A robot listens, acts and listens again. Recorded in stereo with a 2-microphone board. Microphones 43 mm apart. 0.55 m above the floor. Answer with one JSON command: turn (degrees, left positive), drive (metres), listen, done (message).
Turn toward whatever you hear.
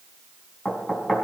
{"turn": 25}
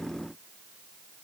{"listen": true}
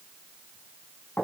{"turn": 130}
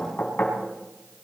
{"turn": 50}
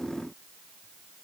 {"listen": true}
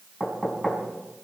{"done": "Found it: knocking, straight ahead, over 4 m away."}